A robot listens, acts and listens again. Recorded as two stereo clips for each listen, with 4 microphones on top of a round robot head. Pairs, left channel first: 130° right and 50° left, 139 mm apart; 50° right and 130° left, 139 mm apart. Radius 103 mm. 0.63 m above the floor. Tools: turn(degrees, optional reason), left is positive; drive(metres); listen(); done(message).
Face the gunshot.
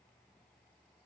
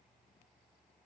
listen()
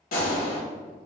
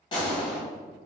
turn(degrees=-105, reason="The gunshot: 105° right.")
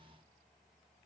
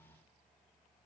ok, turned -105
done("I heard a gunshot from this way, but can't make it out now.")